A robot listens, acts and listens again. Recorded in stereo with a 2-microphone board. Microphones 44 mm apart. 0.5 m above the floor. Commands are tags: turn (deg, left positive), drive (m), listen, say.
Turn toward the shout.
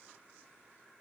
<listen/>
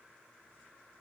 <listen/>
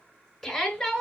<turn deg="30"/>
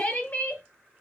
<turn deg="145"/>
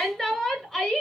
<turn deg="10"/>
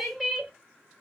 <say>Found it: a shout, straight ahead, 1 to 2 m away.</say>